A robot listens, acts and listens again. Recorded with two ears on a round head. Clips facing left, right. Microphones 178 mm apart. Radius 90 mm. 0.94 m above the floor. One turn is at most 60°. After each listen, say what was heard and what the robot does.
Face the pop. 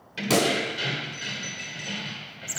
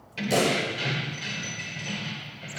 Turn 60° left.
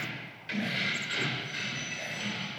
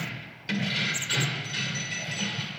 Nothing new. It was at 30° left. Turn 30° left.
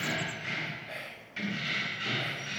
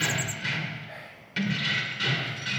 I heard a pop from this way, but can't make it out now.